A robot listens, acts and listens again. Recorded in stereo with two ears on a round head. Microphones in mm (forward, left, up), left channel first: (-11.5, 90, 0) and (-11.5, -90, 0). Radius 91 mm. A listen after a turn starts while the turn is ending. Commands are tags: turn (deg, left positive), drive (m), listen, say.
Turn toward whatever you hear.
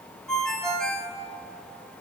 <turn deg="30"/>
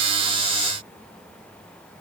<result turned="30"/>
<listen/>
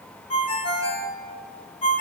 <turn deg="150"/>
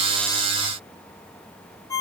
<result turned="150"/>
<turn deg="15"/>
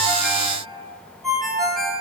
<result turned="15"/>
<say>Facing the ringtone, 1 to 2 m away.</say>